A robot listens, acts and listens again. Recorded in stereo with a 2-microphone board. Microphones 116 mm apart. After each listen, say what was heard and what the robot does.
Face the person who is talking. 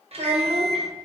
The child speaking: about 60° right or 120° right. Turn 60° right.
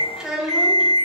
Facing the child speaking.